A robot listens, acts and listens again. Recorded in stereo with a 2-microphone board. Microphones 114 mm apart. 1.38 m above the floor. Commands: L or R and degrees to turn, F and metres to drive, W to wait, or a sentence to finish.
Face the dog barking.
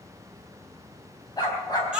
L35
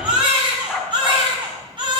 Facing the dog barking, 2 to 4 m away.